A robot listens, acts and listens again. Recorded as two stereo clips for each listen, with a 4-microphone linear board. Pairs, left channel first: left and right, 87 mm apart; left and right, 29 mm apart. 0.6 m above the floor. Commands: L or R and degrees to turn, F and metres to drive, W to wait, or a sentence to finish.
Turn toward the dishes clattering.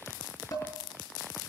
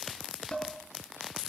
L45
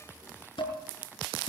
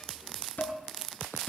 L85
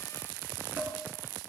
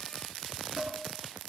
R20
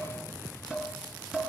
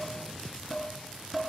Facing the dishes clattering, over 4 m away.